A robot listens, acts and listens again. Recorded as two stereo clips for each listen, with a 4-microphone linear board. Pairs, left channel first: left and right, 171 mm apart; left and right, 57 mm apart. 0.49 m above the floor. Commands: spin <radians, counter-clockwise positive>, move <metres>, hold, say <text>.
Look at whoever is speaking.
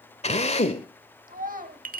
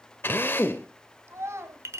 spin -0.96
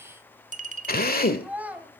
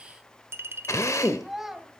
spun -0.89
spin -0.17
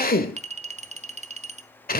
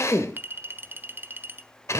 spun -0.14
hold
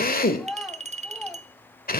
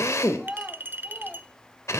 say Found it: a child speaking, straight ahead.